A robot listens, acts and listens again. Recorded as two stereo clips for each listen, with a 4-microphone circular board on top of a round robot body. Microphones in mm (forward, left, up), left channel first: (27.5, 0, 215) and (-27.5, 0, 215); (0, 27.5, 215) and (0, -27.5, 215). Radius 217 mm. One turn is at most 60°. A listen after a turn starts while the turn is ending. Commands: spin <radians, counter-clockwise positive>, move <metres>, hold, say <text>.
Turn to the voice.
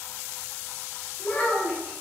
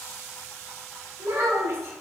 spin -1.05
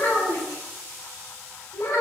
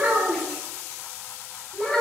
say Found it: a child speaking, straight ahead, 1 to 2 m away.